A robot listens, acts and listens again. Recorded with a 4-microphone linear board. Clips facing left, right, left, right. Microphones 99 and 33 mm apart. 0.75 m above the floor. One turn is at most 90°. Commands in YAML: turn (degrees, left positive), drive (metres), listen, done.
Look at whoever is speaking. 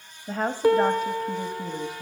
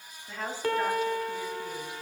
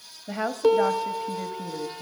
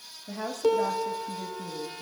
turn: 40
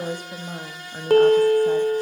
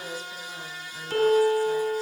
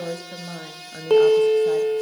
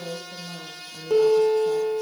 turn: 90
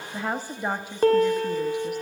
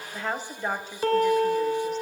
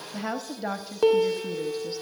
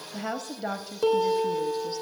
turn: 15
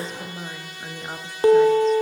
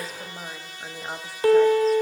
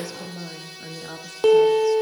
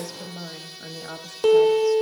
done: "Facing the woman speaking, under 1 m away."